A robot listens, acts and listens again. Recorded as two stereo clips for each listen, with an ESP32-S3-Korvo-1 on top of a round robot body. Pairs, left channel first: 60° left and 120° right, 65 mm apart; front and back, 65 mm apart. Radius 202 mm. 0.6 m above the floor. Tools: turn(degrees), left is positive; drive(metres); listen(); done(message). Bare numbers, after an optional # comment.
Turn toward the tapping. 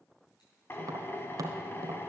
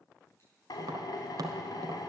# The tapping: 155° right.
turn(-155)
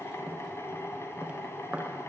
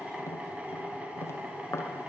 # The tapping is now 45° right.
turn(-45)
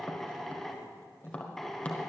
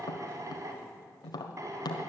# The tapping is now 10° right.
turn(-10)
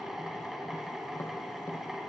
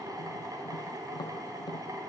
done("Found it: tapping, straight ahead, 1 to 2 m away.")